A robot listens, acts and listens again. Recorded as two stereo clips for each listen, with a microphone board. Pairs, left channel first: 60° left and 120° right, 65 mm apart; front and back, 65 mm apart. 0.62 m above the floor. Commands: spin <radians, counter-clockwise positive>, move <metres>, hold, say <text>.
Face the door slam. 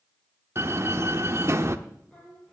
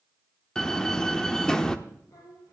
spin -1.31
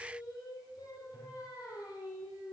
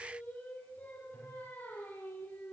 say I heard a door slam from this way, but can't make it out now.